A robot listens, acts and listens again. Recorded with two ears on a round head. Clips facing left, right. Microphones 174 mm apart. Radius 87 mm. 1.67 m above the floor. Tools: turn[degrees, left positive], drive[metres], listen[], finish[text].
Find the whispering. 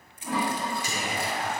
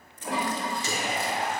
Thought: The whispering: about 25° right or 155° right.
Action: turn[-25]
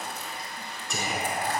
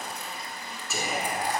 Action: finish[Found it: whispering, straight ahead, over 4 m away.]